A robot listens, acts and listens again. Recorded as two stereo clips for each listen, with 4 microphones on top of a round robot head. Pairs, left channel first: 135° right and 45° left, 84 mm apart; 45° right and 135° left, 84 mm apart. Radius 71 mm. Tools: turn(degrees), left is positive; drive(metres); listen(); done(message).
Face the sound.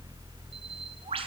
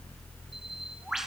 turn(degrees=50)
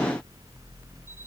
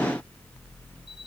listen()
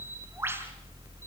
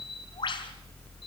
turn(degrees=-20)
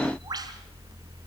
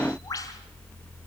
done("Found it: a bird, straight ahead, over 4 m away.")